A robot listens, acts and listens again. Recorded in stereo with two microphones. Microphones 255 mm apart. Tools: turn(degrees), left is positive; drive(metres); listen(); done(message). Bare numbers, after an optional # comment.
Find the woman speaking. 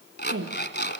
# The woman speaking: about 55° right or 125° right.
turn(-55)
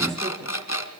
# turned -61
listen()
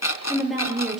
done("Facing the woman speaking, over 4 m away.")